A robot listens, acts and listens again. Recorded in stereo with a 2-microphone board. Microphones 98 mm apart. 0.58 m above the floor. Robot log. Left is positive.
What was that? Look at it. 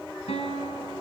cmd yaw +90
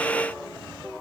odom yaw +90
cmd idle
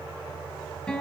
end: Facing the guitar, 2 to 4 m away.